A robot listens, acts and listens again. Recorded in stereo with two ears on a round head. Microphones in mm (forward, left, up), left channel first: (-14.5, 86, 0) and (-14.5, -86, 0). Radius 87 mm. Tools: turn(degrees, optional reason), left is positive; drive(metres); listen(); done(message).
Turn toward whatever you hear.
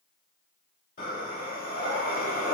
turn(degrees=45, reason="The breathing: about 45° left or 135° left.")
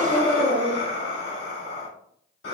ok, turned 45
turn(degrees=75, reason="So it is at 75° left.")
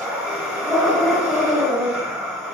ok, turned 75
done("Found it: breathing, straight ahead.")